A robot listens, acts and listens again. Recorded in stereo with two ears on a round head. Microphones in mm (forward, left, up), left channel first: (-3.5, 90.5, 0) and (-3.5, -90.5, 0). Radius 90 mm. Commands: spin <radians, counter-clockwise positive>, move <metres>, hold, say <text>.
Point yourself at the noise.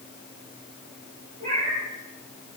spin -0.61
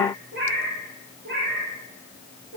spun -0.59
spin -2.27
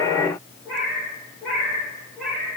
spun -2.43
say Found it: a cat meowing, straight ahead, over 4 m away.